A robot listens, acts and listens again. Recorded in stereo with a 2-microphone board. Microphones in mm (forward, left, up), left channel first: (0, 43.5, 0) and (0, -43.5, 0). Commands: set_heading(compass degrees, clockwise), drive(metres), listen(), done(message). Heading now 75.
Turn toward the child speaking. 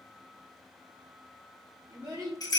set_heading(125)
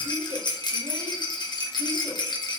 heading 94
listen()
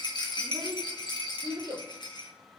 set_heading(164)
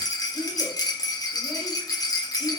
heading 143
listen()
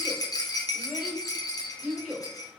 set_heading(163)
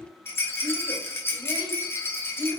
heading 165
done("Found it: a child speaking, straight ahead, 2 to 4 m away.")